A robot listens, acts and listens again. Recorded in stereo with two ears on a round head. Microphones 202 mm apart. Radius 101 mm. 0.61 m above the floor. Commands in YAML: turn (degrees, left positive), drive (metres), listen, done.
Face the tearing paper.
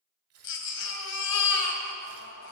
turn: -75
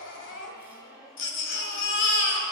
listen: true
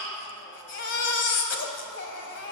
listen: true
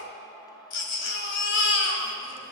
done: "I heard tearing paper, but can't make it out now. It was about straight ahead or 30° right."